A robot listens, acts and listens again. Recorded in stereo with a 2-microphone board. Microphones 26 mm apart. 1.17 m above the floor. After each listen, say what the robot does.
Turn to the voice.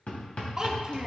Turn 25° right.
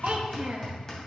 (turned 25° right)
Turn 110° right.
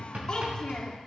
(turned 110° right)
Turn 30° left.
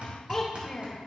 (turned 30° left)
Facing the child speaking, 2 to 4 m away.